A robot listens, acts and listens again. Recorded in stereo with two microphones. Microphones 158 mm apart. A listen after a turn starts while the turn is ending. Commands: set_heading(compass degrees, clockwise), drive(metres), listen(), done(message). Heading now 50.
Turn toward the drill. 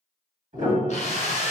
set_heading(0)
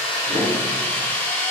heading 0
set_heading(340)
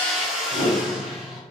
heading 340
done("Facing the drill.")